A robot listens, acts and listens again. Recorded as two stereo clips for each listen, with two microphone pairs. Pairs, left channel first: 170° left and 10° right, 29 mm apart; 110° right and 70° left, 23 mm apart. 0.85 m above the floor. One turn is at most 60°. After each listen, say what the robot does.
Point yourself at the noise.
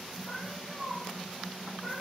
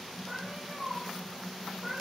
Turn 60° left.
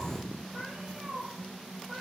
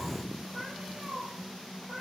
Turn 40° left.
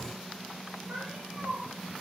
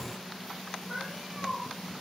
Turn 10° right.
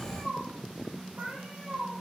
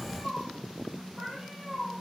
Facing the cat meowing, over 4 m away.